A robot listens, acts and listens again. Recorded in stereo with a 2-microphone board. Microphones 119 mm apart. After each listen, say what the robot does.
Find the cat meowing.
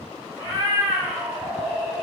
Turn 30° right.
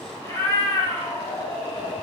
Turn 50° left.
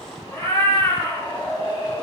Turn 35° left.
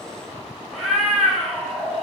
Facing the cat meowing.